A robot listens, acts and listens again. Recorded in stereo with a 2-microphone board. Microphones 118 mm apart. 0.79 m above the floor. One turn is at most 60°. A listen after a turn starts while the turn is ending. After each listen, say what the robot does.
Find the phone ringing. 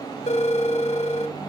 Turn 60° left.
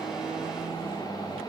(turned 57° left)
Keep listening.
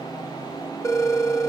Turn 30° left.
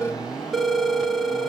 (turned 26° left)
Facing the phone ringing, 1 to 2 m away.